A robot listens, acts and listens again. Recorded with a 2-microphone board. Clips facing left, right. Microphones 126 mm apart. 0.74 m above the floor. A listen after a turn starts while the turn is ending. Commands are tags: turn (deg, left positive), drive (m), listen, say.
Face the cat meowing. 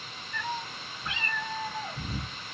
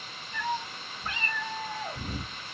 <turn deg="-40"/>
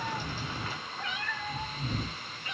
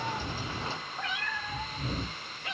<turn deg="-100"/>
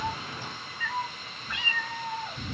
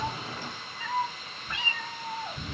<turn deg="-35"/>
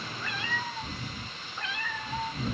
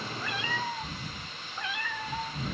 <turn deg="-10"/>
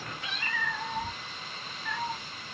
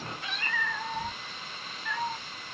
<say>Facing the cat meowing.</say>